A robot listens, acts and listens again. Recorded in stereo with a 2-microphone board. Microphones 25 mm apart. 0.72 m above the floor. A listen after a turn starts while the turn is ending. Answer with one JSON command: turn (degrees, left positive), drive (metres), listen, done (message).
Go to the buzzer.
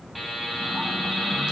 {"turn": 30}
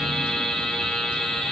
{"turn": 145}
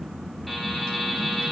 {"drive": 1.0}
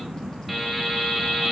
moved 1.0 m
{"drive": 1.0}
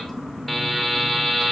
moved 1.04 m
{"drive": 1.0}
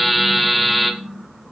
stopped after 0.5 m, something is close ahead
{"done": "I am next to the buzzer."}